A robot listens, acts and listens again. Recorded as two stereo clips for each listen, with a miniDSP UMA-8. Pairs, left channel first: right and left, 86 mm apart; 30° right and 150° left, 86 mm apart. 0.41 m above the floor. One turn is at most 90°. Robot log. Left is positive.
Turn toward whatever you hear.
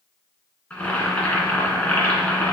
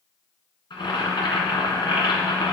note: The boiling: 15° right.
cmd yaw -15
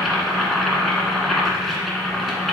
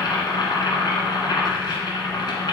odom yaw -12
end: Facing the boiling.